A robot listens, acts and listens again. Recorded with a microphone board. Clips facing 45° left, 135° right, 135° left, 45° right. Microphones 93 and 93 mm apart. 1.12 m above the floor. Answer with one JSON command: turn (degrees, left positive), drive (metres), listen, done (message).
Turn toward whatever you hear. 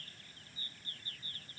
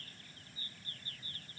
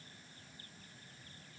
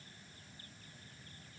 {"listen": true}
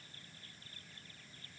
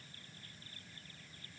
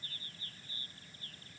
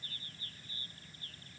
{"listen": true}
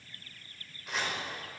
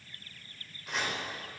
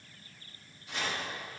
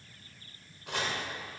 {"turn": -45}
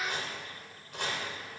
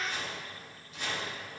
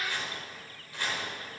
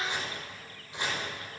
{"turn": 25}
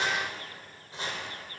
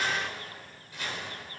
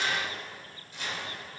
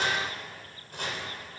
{"turn": -10}
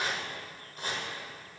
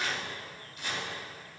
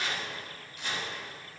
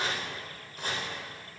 {"done": "Facing the chopping."}